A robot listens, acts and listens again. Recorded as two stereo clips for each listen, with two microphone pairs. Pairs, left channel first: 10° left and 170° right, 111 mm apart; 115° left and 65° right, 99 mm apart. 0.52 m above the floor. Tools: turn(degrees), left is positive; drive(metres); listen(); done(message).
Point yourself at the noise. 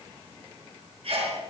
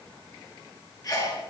turn(degrees=160)
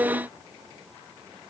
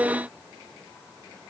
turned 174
turn(degrees=-15)
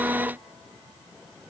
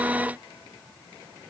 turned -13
done("Facing where the sneeze came from. I can't hear it now.")